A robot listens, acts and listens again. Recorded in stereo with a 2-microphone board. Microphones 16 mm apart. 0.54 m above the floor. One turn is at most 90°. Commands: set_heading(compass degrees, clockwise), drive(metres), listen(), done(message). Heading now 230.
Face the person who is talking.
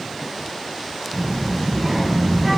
set_heading(195)
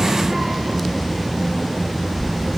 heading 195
done("Found it: a child speaking, straight ahead, over 4 m away.")